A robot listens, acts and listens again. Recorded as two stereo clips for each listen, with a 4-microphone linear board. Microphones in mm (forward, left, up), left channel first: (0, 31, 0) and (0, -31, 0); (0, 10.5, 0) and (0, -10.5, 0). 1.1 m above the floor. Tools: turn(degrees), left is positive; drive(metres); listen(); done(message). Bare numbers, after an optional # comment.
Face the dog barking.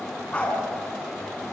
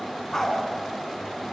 # The dog barking: about 20° left or 160° left.
turn(20)
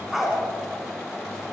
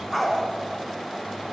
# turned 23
done("Facing the dog barking, 2 to 4 m away.")